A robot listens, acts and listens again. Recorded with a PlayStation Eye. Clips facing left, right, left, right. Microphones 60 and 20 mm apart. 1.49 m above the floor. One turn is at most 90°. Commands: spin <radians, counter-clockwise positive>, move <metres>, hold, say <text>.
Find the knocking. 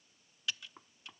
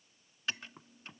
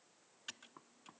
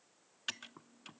spin 0.52
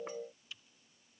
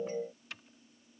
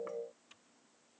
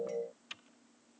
hold
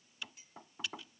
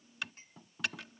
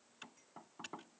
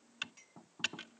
spin 1.57
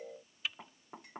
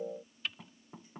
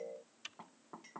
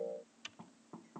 spin 0.52
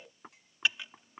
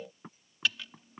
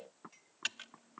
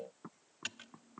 spin 0.17
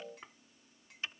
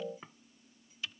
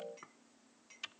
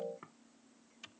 say Facing the knocking.